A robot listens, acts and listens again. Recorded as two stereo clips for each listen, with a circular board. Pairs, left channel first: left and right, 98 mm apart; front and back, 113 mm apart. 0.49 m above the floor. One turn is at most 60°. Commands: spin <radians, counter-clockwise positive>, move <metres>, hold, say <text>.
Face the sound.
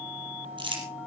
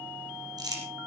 spin -1.05
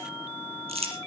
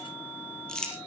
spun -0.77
spin -1.05
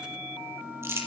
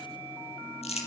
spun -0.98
spin -0.44
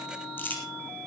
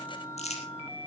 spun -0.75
spin 0.35
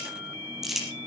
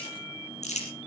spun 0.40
say Found it: crumpling, straight ahead, over 4 m away.